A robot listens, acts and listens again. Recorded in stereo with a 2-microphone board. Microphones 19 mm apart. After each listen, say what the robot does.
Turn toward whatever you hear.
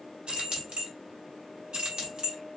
Turn 50° right.
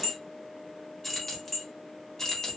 Turn 35° left.
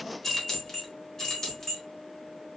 Turn 30° left.
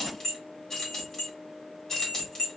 Turn 20° left.
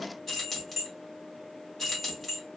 Facing the keys jangling, 1 to 2 m away.